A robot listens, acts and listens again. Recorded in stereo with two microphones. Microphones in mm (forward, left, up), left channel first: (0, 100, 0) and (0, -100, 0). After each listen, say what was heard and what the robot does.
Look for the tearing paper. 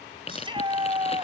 The tearing paper: about 30° left or 150° left. Turn 30° left.
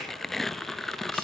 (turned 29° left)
Found it: tearing paper, straight ahead.